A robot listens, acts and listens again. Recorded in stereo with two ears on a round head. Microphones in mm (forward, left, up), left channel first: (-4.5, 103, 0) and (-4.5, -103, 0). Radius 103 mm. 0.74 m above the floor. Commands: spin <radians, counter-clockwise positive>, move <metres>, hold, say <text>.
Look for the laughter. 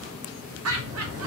spin -1.22
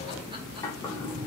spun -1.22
hold
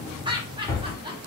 spin -0.35
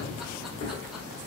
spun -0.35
hold
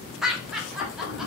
say Found it: laughter, straight ahead.